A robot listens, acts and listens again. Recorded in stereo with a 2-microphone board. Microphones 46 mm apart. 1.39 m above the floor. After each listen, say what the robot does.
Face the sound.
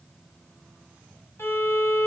Turn 55° left.
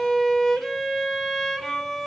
Found it: a violin, straight ahead.